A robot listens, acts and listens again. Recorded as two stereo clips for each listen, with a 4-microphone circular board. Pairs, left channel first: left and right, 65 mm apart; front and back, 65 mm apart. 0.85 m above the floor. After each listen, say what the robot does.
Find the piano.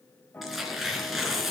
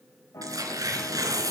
Turn 30° left.
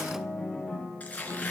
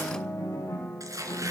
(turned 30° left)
Facing the piano.